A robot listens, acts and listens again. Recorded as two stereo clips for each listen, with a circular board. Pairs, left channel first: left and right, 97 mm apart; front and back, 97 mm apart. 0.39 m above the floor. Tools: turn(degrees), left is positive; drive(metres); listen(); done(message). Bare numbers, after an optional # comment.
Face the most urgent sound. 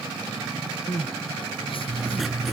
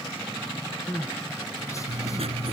# The crying: 60° left.
turn(60)
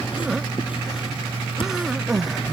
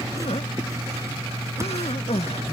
done("Facing the crying.")